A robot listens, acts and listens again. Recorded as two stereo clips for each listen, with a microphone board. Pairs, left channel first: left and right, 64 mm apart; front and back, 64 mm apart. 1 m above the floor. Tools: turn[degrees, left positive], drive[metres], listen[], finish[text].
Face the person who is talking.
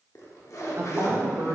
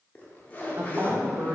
Thought: The woman speaking: 140° right.
Action: turn[-140]
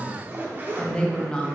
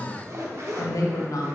Thought: The woman speaking is now 15° left.
Action: turn[15]
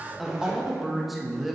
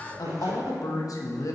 Action: finish[Facing the woman speaking, 1 to 2 m away.]